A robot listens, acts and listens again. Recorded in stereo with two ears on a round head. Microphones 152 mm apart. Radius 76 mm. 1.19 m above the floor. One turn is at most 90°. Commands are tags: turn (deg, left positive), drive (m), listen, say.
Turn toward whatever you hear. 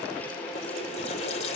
<turn deg="40"/>
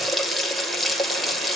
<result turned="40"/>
<say>Found it: a running tap, straight ahead, 2 to 4 m away.</say>